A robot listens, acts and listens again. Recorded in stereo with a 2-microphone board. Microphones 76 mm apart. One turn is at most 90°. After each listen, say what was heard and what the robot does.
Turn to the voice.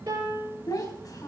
The child speaking: about 55° left or 125° left. Turn 55° left.
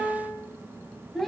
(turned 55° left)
Facing the child speaking, 2 to 4 m away.